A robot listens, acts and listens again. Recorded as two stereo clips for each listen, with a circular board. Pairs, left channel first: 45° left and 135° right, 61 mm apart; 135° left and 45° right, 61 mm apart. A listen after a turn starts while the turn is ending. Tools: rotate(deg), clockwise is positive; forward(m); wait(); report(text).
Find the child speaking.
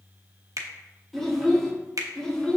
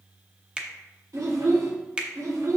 rotate(35)
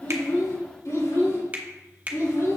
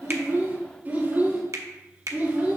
rotate(-20)
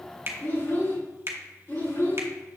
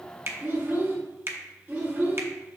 report("Found it: a child speaking, straight ahead, 2 to 4 m away.")